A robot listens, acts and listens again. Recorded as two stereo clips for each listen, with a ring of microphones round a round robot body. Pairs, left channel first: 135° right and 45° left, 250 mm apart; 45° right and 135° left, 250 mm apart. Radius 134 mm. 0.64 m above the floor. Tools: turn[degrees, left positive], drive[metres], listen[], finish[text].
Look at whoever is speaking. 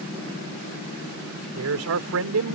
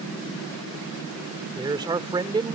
Thought: The man speaking: 65° left.
Action: turn[65]
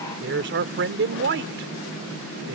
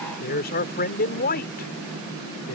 Action: finish[Facing the man speaking.]